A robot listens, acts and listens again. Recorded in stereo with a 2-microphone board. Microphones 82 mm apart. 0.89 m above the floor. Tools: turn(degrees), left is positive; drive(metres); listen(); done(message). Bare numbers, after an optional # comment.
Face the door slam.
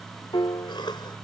listen()
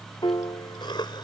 listen()
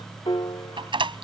turn(-90)
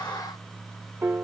done("I heard a door slam from this way, but can't make it out now.")